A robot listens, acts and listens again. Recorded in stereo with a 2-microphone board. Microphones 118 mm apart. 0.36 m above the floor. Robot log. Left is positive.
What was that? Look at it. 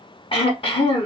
note: The throat clearing: about 50° left or 130° left.
cmd yaw +50
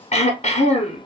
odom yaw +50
note: So it is at 75° left.
cmd yaw +75
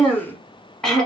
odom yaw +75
end: Found it: throat clearing, straight ahead.